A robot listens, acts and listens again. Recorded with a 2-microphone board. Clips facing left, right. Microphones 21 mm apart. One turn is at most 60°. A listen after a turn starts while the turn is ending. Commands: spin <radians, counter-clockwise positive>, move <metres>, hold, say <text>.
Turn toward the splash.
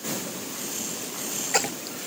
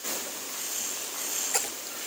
spin 0.44
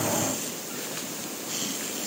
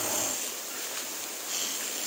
hold
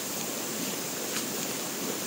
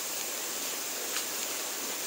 say I heard a splash, but can't make it out now. It was about straight ahead or 130° left.